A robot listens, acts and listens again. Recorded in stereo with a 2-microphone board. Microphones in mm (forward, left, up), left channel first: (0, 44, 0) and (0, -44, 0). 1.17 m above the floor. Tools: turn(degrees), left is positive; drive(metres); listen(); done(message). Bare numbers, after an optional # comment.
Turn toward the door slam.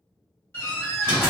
# The door slam: about 25° left or 155° left.
turn(25)
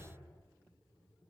listen()
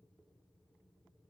done("I heard a door slam, but can't make it out now. It was about straight ahead or 130° left.")